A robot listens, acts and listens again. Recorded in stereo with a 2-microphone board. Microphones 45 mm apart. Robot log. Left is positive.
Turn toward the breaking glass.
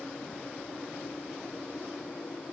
cmd idle
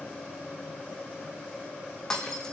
cmd yaw +30
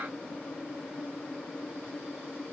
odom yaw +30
cmd idle
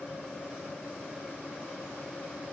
end: I heard breaking glass, but can't make it out now. It was about 15° right or 135° left.